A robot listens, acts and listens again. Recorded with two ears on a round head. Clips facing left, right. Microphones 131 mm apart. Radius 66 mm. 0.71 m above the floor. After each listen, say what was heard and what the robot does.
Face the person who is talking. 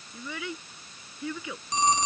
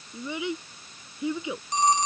The child speaking: about 20° right or 160° right. Turn 20° right.
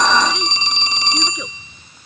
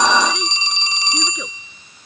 Keep listening.
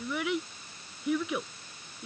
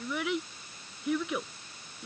Found it: a child speaking, straight ahead.